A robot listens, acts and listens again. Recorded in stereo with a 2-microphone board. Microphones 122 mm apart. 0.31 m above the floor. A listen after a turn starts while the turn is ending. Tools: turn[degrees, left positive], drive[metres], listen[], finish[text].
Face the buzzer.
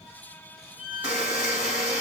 Action: turn[-30]
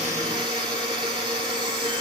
Thought: So it is at 140° right.
Action: turn[-140]
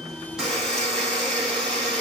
Action: finish[Facing the buzzer.]